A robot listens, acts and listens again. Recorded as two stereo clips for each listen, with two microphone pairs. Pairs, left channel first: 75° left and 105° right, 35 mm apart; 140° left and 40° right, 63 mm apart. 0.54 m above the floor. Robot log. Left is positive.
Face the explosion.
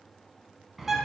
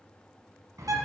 cmd idle
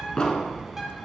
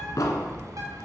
note: The explosion: 145° left.
cmd yaw +145
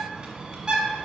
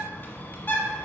end: I heard an explosion from this way, but can't make it out now.